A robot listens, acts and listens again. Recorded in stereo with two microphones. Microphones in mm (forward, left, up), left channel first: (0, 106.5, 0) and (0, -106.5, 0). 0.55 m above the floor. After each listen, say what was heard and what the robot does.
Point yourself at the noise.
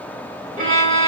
The violin: about 40° right or 140° right. Turn 40° right.
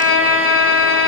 So it is at 100° right. Turn 100° right.
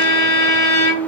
The violin is now 15° left. Turn 15° left.
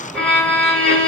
Facing the violin.